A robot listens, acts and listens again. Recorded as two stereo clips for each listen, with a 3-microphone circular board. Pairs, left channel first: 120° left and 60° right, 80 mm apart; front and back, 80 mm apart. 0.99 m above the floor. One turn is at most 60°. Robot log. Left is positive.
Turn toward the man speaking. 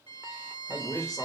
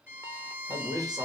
note: The man speaking: 150° left.
cmd yaw +60
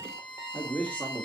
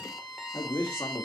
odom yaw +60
note: The man speaking is now 50° left.
cmd yaw +50
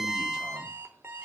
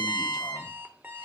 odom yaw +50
cmd idle
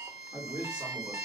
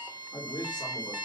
note: The man speaking is now 15° left.
cmd yaw +15
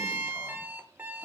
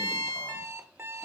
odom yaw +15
cmd idle
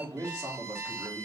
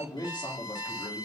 end: Found it: a man speaking, straight ahead, 2 to 4 m away.